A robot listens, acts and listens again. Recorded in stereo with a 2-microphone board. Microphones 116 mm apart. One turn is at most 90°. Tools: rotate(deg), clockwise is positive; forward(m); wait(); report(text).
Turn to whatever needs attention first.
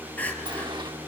rotate(-30)
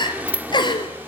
rotate(-90)
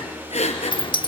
rotate(-75)
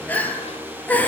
rotate(-15)
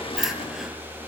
wait()
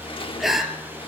report("Found it: crying, straight ahead, 2 to 4 m away.")